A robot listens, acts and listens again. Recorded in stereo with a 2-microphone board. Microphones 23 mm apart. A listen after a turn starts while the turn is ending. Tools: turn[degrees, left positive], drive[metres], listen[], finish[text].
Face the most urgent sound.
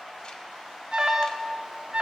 Thought: The alarm: about 35° right or 145° right.
Action: turn[-35]
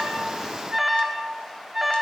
Action: finish[Facing the alarm, 1 to 2 m away.]